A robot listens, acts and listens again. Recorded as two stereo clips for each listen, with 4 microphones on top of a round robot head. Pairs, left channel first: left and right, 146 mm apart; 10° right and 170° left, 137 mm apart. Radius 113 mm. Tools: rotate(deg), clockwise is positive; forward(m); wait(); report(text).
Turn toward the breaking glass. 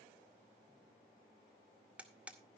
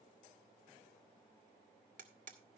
wait()
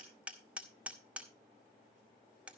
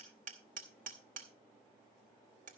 wait()
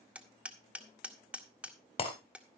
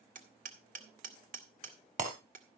rotate(-140)
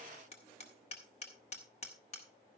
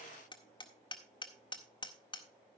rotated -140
report("I heard breaking glass from this way, but can't make it out now.")